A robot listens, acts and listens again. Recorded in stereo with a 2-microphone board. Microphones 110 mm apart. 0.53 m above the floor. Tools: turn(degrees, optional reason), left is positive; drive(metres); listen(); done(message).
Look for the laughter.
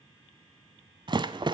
listen()
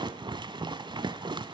listen()
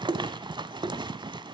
done("I can't make out laughter to turn to.")